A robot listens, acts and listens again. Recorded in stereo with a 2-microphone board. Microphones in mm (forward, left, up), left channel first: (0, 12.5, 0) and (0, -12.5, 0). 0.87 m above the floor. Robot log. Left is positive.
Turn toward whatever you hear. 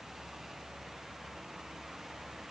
cmd idle
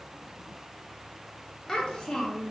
note: The child speaking: about 30° left or 150° left.
cmd yaw +30
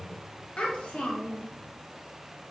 note: So it is at 120° left.
cmd yaw +120
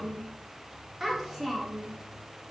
note: The child speaking is now 10° right.
cmd yaw -10
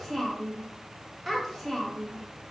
end: Found it: a child speaking, straight ahead.